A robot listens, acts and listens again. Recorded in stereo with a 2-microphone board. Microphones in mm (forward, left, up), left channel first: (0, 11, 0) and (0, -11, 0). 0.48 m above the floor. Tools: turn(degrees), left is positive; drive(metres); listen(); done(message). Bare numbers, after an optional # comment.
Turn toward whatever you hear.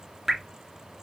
turn(30)
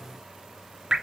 # So it is at 35° right.
turn(-35)
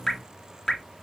# The dripping is now 30° left.
turn(30)
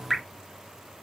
done("Facing the dripping, 2 to 4 m away.")